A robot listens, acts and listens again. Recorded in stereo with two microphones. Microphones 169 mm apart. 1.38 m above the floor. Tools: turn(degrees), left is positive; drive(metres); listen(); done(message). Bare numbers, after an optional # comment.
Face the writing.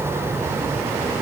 listen()
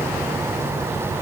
listen()
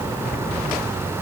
done("I can't make out writing.")